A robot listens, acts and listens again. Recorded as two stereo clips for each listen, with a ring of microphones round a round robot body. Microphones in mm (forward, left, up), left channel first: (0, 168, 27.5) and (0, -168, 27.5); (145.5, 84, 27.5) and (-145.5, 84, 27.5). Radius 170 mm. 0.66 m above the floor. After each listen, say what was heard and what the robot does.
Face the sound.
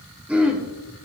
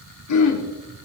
Facing the throat clearing.